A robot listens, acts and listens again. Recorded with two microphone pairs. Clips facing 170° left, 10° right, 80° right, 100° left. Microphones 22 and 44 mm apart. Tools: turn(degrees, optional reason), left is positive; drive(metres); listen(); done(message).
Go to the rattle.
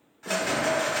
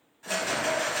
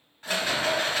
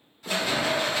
turn(degrees=-135, reason="The rattle: 135° right.")
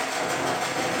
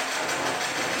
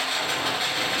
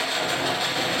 drive(metres=1.0)
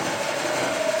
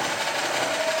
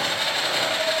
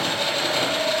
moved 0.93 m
drive(metres=1.0)
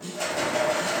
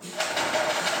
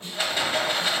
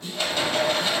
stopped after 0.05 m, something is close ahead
turn(degrees=-10, reason="The rattle is now 10° right.")
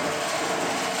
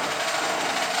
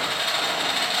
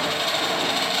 done("Arrived at the rattle, straight ahead.")